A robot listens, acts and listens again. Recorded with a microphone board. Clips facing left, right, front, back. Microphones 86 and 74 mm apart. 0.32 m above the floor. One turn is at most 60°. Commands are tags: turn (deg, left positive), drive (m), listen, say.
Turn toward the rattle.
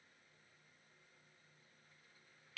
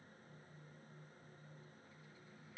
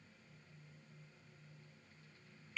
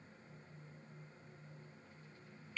<listen/>
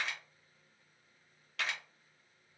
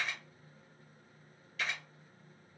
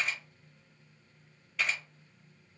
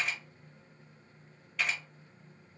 <listen/>
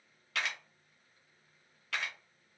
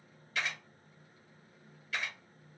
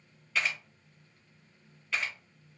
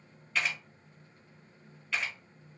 <say>I can't make out a rattle, only a camera shutter.</say>